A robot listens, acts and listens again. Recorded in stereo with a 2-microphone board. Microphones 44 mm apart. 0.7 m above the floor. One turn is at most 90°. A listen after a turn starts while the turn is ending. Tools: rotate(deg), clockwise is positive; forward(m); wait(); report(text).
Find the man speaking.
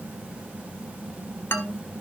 rotate(-55)
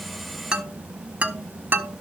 rotate(40)
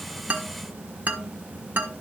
rotate(45)
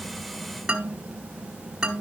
rotate(10)
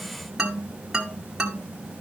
report("Facing the man speaking, 1 to 2 m away.")